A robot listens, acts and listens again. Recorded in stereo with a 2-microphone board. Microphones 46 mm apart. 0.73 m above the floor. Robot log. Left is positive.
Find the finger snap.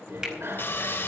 note: The finger snap: about 20° right or 160° right.
cmd yaw -20
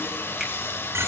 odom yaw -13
cmd idle
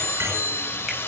cmd idle
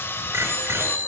end: I heard a finger snap, but can't make it out now. It was about 10° right or 145° right.